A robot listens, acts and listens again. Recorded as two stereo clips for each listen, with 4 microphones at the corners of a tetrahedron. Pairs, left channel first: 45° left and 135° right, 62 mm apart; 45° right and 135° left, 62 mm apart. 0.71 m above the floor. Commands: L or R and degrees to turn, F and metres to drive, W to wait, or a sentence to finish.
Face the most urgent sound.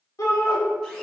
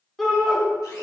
L40
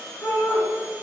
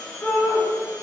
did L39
Facing the shout.